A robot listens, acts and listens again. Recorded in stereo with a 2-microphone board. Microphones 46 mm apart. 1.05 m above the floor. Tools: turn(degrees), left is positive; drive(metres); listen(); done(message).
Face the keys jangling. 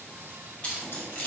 turn(degrees=30)
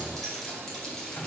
done("Found it: keys jangling, straight ahead.")